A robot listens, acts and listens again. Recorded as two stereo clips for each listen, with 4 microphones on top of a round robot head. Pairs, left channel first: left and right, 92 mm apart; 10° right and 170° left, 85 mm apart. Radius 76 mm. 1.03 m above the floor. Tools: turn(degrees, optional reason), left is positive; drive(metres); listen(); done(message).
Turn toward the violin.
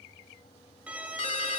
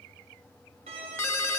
turn(degrees=-165, reason="The violin: 165° right.")
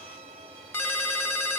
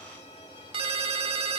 turn(degrees=-55, reason="The violin is now 55° right.")
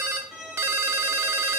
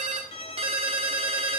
done("Facing the violin.")